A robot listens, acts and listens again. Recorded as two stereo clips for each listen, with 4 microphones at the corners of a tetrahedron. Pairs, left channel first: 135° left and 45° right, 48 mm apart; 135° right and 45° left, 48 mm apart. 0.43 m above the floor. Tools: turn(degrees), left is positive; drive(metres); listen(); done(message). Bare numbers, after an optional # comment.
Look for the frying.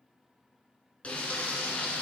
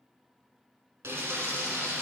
# The frying: 75° left.
turn(75)
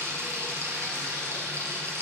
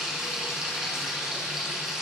# The frying is now 30° right.
turn(-30)
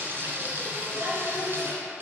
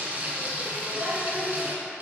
# The frying is now 10° right.
turn(-10)
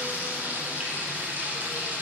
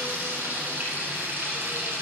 done("Facing the frying, 1 to 2 m away.")